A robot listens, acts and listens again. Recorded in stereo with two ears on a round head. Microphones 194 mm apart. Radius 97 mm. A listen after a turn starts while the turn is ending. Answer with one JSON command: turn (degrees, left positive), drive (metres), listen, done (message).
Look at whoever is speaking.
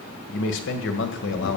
{"turn": 60}
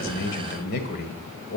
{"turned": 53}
{"turn": 55}
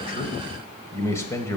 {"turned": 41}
{"turn": 15}
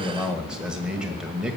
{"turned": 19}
{"done": "Found it: a man speaking, straight ahead."}